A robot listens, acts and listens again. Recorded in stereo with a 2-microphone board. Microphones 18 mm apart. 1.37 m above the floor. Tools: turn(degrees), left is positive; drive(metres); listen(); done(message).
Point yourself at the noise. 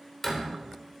turn(degrees=15)
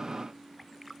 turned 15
listen()
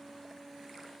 done("I heard a door slam, but can't make it out now. It was about straight ahead or 150° left.")